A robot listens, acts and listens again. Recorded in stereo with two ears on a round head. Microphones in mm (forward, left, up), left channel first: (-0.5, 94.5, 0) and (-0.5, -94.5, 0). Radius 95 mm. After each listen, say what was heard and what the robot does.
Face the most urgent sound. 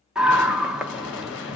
Turn 30° right.
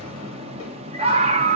So it is at 145° right. Turn 145° right.
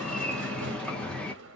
Found it: a scream, straight ahead.